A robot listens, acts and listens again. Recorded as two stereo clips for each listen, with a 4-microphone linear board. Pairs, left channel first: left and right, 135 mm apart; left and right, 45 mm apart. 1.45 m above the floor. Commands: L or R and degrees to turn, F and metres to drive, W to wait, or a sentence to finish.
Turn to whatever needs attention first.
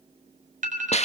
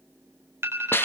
R75
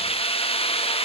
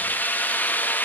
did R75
W
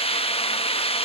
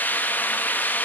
W
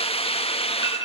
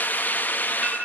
R30
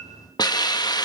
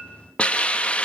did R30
W
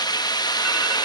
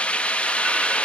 W
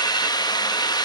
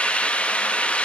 Facing where the alarm came from. I can't hear it now.